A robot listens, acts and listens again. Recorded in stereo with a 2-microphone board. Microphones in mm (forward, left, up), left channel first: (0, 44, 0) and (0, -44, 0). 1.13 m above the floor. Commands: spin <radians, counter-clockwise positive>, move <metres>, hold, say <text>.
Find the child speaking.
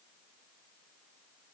hold
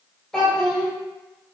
spin 0.52
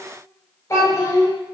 spin 2.53
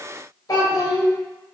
spin 0.79
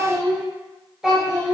say Found it: a child speaking, straight ahead.